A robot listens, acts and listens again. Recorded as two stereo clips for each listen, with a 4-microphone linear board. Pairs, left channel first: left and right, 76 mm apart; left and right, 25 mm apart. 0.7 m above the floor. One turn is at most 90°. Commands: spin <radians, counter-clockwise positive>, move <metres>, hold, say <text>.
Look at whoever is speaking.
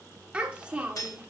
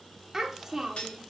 spin -0.26
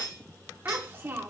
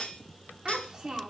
spin -1.57
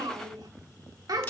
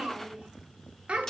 spin -1.22
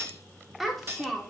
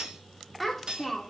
say Found it: a child speaking, straight ahead.